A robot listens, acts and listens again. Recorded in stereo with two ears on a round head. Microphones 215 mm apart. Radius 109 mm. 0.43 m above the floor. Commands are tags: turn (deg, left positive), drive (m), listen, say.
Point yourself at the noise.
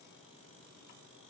<listen/>
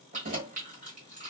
<turn deg="-35"/>
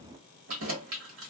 <turn deg="-110"/>
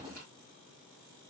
<listen/>
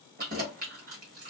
<turn deg="-40"/>
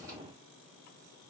<listen/>
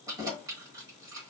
<turn deg="-15"/>
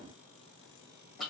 <say>Facing the keys jangling.</say>